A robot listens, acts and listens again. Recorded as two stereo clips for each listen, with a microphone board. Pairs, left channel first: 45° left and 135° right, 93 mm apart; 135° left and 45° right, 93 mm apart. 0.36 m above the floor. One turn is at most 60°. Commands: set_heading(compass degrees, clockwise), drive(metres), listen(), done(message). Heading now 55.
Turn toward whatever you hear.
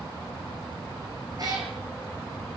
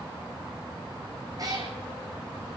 set_heading(115)
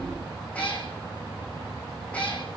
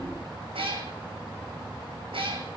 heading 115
set_heading(145)
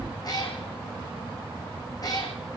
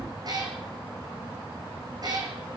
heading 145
done("Found it: a cat meowing, straight ahead.")